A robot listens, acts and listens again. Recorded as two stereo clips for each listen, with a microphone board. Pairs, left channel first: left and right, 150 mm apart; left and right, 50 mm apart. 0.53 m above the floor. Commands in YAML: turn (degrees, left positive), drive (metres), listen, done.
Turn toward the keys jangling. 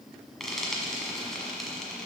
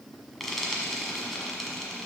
listen: true
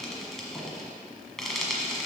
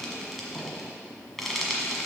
listen: true
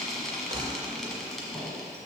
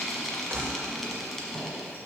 turn: -50
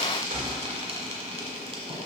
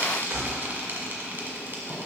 turn: -80
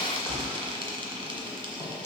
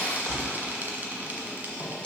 turn: 20
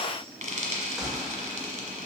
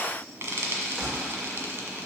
done: "Facing the keys jangling, 1 to 2 m away."